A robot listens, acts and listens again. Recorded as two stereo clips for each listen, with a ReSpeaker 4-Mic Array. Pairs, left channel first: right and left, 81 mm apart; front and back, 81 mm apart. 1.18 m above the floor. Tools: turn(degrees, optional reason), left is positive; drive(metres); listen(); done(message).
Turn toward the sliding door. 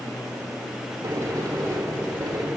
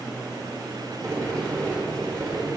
turn(degrees=135, reason="The sliding door: 135° left.")
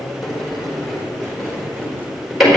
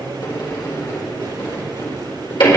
done("Found it: a sliding door, straight ahead.")